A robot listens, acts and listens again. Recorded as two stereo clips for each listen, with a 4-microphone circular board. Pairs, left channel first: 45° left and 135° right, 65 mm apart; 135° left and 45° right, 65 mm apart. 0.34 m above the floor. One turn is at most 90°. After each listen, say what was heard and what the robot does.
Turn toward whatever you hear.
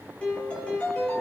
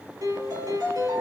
The piano: 25° right. Turn 25° right.
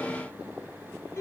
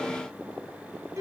Found it: a piano, straight ahead.